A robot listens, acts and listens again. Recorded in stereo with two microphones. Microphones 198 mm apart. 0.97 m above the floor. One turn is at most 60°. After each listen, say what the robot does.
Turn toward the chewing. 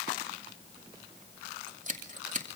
Keep listening.
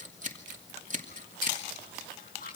Turn 50° left.
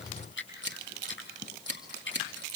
Turn 60° left.
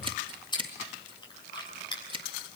Turn 25° left.
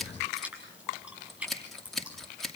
Found it: chewing, straight ahead, over 4 m away.